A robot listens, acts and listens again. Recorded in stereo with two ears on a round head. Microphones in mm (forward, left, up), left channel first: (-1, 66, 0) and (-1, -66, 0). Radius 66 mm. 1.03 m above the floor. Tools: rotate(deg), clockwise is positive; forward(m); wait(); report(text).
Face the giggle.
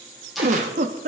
rotate(50)
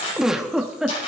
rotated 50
report("Facing the giggle.")